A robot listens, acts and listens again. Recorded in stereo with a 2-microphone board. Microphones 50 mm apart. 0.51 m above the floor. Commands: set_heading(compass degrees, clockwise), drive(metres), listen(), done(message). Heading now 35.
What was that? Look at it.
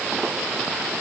listen()
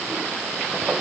listen()
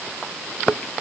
done("I can't make out anything.")